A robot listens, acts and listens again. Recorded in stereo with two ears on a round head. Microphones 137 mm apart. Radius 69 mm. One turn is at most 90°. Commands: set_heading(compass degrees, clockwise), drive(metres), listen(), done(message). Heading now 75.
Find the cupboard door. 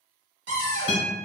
set_heading(165)
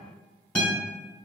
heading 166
listen()
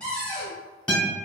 done("Facing the cupboard door.")